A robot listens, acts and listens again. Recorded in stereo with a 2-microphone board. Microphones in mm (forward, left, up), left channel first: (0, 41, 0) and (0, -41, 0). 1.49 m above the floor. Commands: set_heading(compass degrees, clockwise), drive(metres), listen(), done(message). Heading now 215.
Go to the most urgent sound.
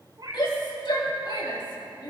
set_heading(125)
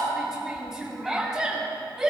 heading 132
drive(1.0)
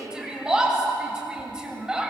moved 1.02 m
set_heading(142)
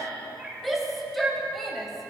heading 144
drive(1.0)
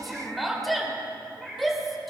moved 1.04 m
drive(1.0)
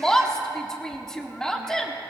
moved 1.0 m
set_heading(134)
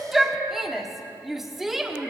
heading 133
drive(1.0)
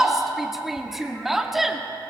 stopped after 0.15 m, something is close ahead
done("I am next to the shout.")